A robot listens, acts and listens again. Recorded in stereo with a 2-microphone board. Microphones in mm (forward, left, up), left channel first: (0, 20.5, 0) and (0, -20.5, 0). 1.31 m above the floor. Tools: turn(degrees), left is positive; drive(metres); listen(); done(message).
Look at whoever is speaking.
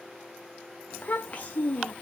turn(degrees=35)
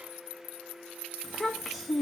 done("Found it: a child speaking, straight ahead.")